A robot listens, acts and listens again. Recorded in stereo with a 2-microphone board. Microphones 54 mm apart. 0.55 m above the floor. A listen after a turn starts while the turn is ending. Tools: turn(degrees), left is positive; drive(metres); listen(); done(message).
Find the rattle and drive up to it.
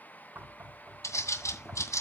listen()
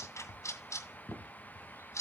listen()
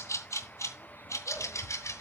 done("I can't make out a rattle to turn to.")